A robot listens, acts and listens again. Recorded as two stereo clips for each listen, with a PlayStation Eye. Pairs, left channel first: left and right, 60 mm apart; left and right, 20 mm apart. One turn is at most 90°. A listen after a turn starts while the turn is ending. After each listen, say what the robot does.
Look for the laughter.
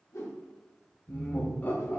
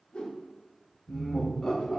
Turn 30° left.
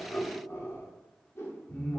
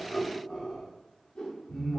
Turn 30° left.
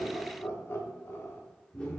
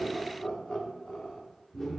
Turn 30° left.
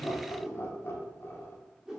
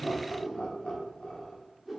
Turn 90° left.
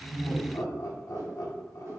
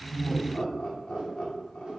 Turn 65° left.
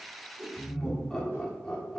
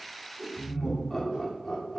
Turn 10° left.
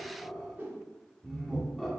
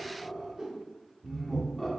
Facing the laughter.